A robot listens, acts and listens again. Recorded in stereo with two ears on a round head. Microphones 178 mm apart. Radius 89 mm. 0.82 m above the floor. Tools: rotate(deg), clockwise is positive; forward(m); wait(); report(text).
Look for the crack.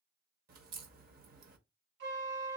rotate(45)
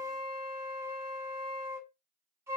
wait()
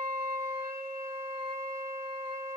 report("I heard a crack, but can't make it out now. It was about straight ahead or 90° right.")